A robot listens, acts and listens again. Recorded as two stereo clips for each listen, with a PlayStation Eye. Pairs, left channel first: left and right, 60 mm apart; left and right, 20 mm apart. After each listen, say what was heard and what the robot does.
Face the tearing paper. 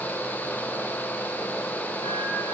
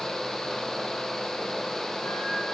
Keep listening.
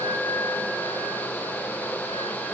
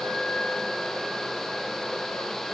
Keep listening.
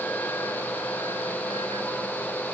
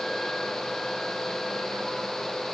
I can't make out tearing paper.